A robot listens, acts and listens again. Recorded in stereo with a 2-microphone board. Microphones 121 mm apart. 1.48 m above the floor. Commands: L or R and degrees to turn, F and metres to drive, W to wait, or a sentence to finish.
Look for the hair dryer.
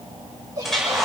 L30
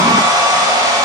R30
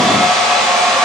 Found it: a hair dryer, straight ahead, over 4 m away.